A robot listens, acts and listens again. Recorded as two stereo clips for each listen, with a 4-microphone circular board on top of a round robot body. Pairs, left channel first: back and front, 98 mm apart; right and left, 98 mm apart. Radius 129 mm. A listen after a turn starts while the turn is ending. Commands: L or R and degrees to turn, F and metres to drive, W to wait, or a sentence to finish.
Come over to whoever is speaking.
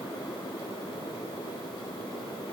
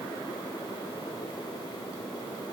W
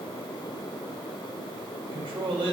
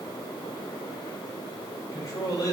R40
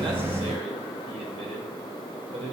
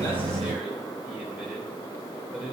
F1.0
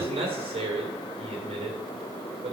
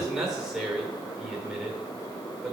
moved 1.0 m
F1.0
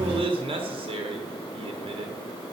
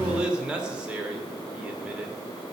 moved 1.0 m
L10
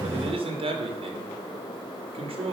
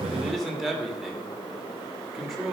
F1.0
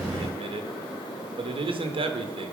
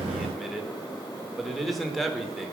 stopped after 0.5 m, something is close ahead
I am next to the man speaking.